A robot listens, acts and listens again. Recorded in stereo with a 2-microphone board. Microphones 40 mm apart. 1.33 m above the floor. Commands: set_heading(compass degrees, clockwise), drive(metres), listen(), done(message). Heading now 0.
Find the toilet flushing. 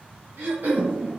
set_heading(30)
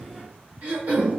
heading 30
set_heading(175)
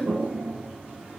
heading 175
set_heading(225)
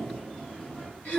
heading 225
set_heading(195)
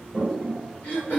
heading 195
set_heading(185)
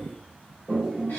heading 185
done("Facing the toilet flushing.")